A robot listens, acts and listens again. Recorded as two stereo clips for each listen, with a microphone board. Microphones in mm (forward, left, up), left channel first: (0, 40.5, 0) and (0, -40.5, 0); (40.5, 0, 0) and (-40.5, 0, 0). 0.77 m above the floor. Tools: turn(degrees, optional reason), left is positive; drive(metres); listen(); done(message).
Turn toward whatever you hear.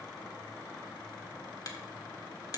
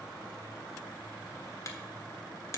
turn(degrees=50, reason="The finger snap: 50° left.")
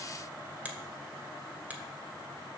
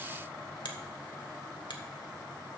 turn(degrees=-20, reason="The finger snap is now 20° right.")
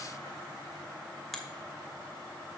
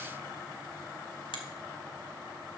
done("Found it: a finger snap, straight ahead, 1 to 2 m away.")